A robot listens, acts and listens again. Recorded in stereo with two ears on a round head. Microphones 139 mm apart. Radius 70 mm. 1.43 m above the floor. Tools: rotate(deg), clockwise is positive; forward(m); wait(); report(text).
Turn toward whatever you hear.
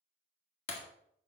rotate(-40)
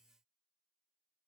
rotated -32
wait()
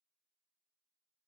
report("I heard breaking glass, but can't make it out now. It was about 5° left or 110° left.")